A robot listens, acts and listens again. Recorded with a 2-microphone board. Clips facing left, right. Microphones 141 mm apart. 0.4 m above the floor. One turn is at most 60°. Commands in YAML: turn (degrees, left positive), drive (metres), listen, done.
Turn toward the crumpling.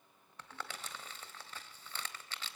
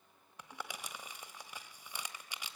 turn: -30
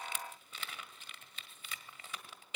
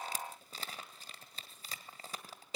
turn: -60
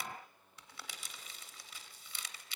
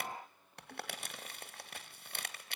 turn: -60
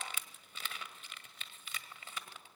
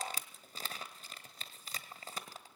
turn: -45
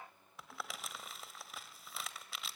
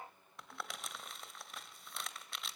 done: "Facing the crumpling, 1 to 2 m away."